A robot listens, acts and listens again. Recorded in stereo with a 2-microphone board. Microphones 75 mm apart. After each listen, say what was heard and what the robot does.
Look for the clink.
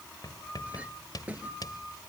The clink: about 20° right or 160° right. Turn 20° right.
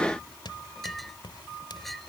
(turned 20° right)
Found it: a clink, straight ahead.